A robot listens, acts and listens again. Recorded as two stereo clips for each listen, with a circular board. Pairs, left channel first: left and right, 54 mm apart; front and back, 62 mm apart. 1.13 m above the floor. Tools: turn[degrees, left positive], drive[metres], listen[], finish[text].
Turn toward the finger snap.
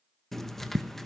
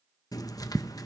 Action: listen[]
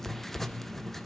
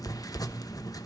Action: listen[]
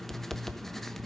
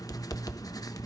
Action: finish[I can't make out a finger snap to turn to.]